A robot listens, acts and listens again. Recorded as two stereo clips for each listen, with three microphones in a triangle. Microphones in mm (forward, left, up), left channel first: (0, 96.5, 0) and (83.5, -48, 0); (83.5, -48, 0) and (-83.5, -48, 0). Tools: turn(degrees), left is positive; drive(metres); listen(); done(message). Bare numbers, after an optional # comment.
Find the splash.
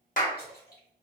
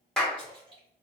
# The splash: 125° left.
turn(125)
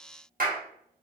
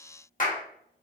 done("Facing where the splash came from. I can't hear it now.")